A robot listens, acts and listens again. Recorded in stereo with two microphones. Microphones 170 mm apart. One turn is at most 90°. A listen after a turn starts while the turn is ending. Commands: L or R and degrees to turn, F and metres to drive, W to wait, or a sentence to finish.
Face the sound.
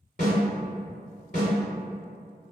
L50
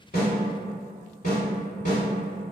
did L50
L65
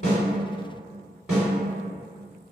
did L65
Facing the snare drum.